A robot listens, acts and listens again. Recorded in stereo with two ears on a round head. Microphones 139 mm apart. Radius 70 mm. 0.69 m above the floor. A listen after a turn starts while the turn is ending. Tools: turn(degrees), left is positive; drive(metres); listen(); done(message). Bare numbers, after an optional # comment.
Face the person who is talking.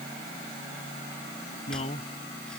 # The man speaking: about 40° left or 140° left.
turn(40)
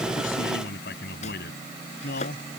# So it is at 110° left.
turn(110)
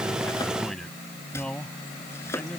done("Facing the man speaking.")